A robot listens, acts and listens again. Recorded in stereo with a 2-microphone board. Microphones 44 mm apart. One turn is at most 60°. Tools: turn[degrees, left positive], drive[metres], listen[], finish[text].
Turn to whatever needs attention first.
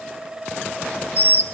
Action: listen[]
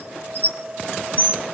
Action: listen[]
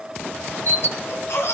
Thought: The baby crying: about 70° left or 110° left.
Action: turn[60]
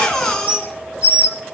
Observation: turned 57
Thought: So it is at 10° left.
Action: turn[10]
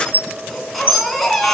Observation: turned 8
Action: finish[Found it: a baby crying, straight ahead.]